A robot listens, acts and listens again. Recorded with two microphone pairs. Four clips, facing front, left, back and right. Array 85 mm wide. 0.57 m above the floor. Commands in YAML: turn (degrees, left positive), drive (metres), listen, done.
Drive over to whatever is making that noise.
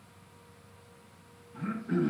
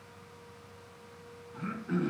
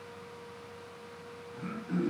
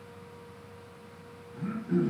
turn: 70
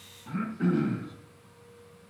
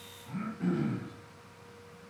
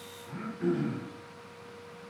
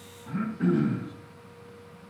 turn: -25
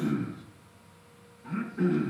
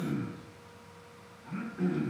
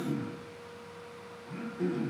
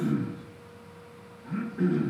drive: 1.0
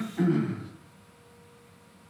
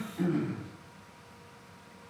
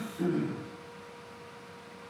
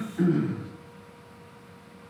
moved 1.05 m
drive: 1.0
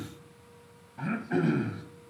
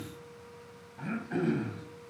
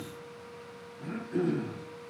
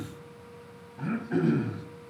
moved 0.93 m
turn: 10
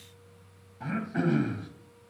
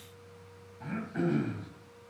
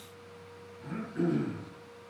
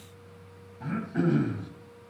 drive: 1.0
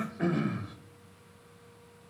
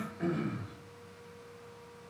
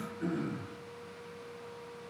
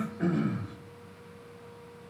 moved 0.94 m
drive: 1.0
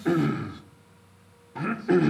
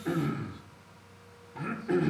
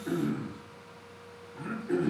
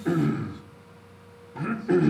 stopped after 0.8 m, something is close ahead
done: "I am next to the throat clearing."